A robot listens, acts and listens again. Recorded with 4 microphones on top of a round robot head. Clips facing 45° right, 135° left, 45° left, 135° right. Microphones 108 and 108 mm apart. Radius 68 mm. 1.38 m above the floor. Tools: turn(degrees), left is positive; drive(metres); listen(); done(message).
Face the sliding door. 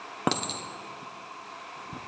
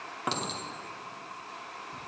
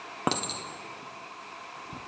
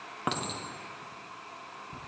listen()
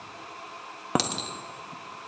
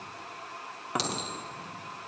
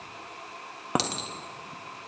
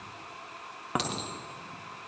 listen()
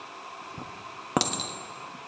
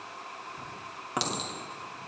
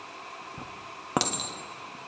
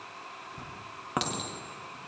done("I can't make out a sliding door, only a clink.")